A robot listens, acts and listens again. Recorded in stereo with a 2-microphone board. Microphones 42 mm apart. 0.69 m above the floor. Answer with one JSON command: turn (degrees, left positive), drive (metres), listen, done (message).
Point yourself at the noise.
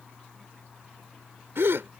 {"turn": -90}
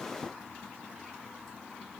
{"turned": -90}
{"done": "Facing where the gasp came from. I can't hear it now."}